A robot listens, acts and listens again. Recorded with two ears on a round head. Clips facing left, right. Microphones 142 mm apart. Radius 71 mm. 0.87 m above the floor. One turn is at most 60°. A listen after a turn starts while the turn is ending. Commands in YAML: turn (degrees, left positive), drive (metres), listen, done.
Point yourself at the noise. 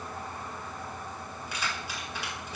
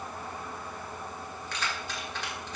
turn: 30
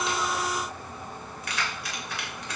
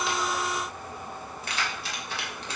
turn: -25
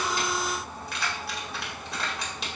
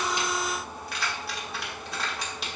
done: "Facing the keys jangling."